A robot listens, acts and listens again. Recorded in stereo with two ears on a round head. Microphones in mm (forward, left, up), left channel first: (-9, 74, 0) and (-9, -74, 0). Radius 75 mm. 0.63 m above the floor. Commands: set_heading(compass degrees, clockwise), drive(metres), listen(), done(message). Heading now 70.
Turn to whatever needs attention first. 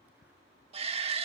set_heading(110)
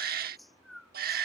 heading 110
set_heading(205)
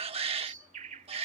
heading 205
set_heading(245)
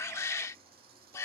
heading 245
set_heading(225)
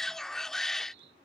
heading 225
done("Found it: a shout, straight ahead.")